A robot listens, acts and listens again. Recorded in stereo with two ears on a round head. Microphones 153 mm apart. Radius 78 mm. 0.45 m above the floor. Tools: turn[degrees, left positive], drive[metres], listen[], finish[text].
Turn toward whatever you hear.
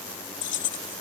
Action: turn[90]
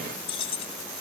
Thought: So it is at 35° left.
Action: turn[35]
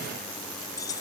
Thought: The keys jangling is now 20° left.
Action: turn[20]
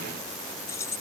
Thought: The keys jangling is now 20° left.
Action: turn[20]
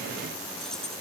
Action: listen[]
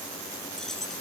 Action: finish[Facing the keys jangling.]